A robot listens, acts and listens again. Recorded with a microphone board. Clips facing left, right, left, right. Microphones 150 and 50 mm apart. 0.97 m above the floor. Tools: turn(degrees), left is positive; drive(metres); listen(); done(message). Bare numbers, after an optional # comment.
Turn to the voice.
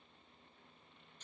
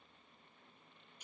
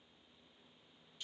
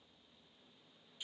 listen()
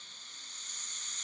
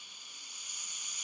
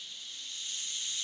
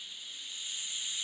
listen()
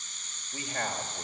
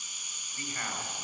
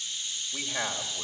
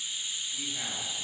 turn(90)
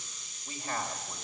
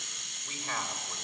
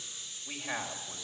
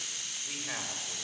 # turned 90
done("Facing the man speaking.")